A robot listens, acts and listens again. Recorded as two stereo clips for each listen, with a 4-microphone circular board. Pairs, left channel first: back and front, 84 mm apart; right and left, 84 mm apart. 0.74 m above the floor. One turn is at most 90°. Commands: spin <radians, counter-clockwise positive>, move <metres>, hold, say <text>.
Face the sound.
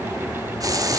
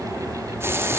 spin 0.61
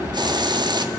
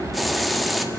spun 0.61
say Facing the hiss, 1 to 2 m away.